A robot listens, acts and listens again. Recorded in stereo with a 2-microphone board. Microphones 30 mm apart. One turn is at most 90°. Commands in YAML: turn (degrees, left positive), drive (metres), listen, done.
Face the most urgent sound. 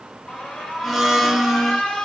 turn: 25
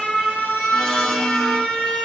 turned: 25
turn: 90
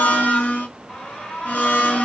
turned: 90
turn: 40
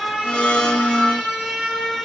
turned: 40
done: "Facing the alarm."